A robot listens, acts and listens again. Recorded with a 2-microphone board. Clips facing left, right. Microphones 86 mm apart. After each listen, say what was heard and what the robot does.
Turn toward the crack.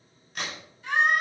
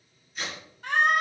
The crack: about 70° left or 110° left. Turn 70° left.
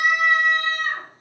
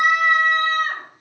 Keep listening.
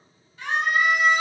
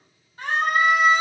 I heard a crack, but can't make it out now. It was about straight ahead or 40° left.